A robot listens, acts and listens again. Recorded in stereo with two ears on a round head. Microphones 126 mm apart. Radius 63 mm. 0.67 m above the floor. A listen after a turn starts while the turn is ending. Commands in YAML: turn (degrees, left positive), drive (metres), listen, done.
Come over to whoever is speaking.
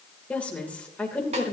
turn: 30
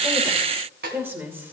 turn: -20
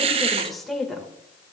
drive: 1.0
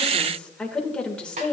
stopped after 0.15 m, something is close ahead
turn: 10
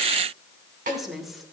done: "Something is in my way. I am facing the woman speaking but have not reached it."